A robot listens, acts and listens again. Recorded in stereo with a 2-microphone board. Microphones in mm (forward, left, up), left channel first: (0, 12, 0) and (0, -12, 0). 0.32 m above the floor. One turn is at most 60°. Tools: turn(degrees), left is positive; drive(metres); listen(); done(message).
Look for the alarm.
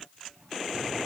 listen()
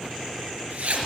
listen()
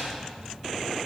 done("I can't make out an alarm, only a zipper.")